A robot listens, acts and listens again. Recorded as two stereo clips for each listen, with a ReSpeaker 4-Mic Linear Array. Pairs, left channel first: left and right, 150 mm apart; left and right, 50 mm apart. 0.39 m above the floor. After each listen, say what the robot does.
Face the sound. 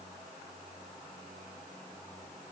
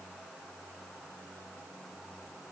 Keep listening.
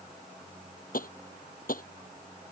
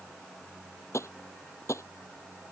Turn 70° left.
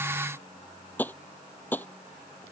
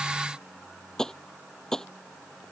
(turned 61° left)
Turn 10° left.
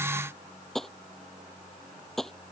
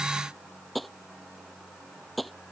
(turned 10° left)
Facing the tapping.